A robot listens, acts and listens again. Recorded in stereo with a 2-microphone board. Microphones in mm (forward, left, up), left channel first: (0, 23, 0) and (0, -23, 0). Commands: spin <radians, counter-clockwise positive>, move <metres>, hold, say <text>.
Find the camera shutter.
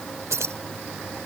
hold
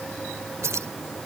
hold
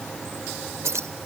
say I can't make out a camera shutter, only keys jangling.